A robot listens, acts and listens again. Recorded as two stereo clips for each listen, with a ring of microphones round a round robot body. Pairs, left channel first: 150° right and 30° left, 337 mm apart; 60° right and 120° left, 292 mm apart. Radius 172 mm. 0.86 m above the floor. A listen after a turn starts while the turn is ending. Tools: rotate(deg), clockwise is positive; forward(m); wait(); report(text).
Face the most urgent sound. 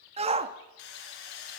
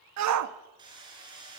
rotate(-100)
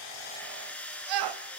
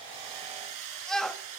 rotate(-30)
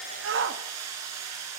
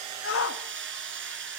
rotate(25)
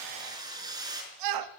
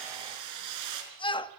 rotate(-10)
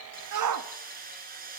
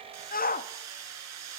report("Facing the shout, 1 to 2 m away.")